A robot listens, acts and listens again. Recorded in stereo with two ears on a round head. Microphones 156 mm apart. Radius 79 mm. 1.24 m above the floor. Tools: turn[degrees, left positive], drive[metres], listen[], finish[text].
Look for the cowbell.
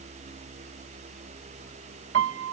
Action: listen[]
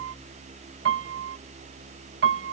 Action: listen[]
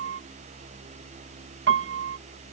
Action: finish[I can't make out a cowbell, only a piano.]